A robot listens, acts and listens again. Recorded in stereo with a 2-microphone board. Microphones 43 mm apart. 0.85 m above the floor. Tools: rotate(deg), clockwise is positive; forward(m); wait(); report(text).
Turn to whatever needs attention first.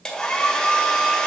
wait()
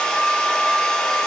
wait()
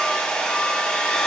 report("I can't make out anything urgent, only a hair dryer.")